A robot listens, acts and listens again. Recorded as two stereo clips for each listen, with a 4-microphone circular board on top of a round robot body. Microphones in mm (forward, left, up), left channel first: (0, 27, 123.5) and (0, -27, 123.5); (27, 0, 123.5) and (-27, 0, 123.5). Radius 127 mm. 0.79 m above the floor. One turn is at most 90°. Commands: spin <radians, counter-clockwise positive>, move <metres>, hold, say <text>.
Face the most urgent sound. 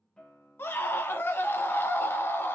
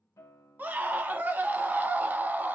spin 1.57
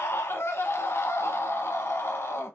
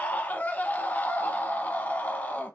spin 0.96
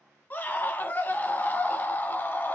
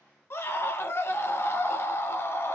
spin 0.70
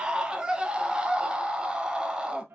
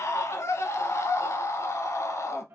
spin -0.35
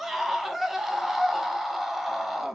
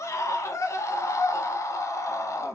say Facing the scream, under 1 m away.